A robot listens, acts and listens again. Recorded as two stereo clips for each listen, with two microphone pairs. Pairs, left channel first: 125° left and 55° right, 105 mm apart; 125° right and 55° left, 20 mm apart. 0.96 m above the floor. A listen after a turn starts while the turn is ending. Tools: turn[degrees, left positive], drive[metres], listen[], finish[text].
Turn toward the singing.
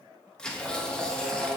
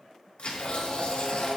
Thought: The singing: 140° right.
Action: turn[-140]
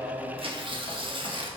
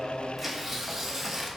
Action: listen[]
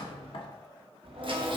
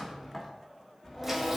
Thought: The singing is now 50° right.
Action: turn[-50]
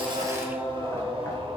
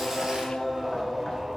Thought: The singing is now 30° right.
Action: turn[-30]
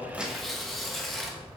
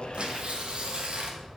Action: finish[Found it: singing, straight ahead.]